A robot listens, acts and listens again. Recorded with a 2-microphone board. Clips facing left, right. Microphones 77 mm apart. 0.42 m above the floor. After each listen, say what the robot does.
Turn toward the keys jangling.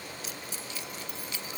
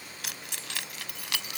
Turn 75° right.
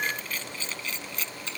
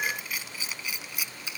Turn 10° right.
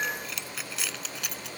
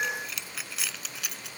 Facing the keys jangling.